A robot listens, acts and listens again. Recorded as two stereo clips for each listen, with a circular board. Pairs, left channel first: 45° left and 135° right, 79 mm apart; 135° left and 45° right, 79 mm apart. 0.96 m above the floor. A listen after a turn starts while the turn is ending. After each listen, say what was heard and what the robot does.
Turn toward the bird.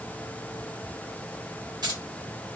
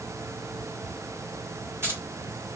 Keep listening.
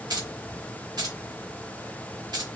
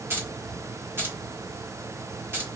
Keep listening.
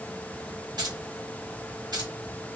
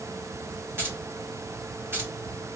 I can't make out a bird, only keys jangling.